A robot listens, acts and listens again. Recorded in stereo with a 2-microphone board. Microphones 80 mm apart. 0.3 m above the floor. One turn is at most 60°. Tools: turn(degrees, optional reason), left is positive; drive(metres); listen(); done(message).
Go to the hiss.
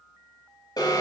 listen()
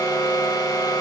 listen()
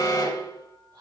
done("I can't make out a hiss to turn to.")